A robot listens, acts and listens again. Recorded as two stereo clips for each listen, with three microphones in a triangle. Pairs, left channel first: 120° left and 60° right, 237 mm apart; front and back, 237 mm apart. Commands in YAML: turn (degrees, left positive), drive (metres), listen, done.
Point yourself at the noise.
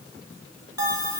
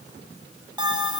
turn: 105
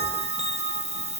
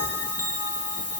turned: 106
done: "Found it: a bell, straight ahead, under 1 m away."